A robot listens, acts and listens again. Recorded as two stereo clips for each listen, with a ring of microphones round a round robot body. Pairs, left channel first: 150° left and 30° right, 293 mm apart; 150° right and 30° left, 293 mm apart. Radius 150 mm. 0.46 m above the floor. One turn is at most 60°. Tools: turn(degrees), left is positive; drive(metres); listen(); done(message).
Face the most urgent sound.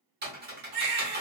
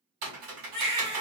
turn(degrees=-25)
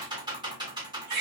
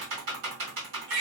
turn(degrees=-10)
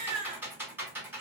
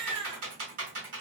done("Found it: a baby crying, straight ahead.")